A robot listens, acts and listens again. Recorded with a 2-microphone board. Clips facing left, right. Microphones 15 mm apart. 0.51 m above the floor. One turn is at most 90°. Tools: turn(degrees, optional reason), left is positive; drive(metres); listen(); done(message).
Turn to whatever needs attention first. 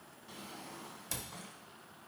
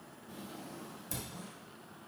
listen()
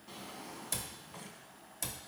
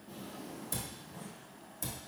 listen()
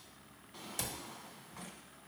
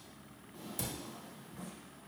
done("I can't make out anything urgent to turn to.")